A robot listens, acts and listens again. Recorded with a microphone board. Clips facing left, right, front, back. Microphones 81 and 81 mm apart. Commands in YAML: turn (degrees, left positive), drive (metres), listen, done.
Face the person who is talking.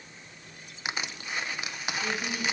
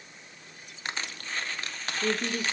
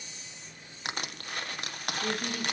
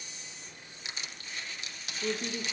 turn: -115
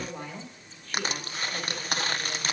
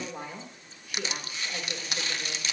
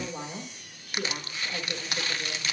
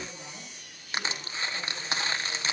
turn: -15
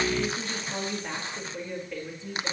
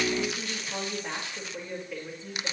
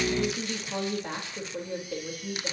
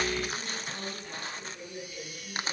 done: "Found it: a woman speaking, straight ahead, over 4 m away."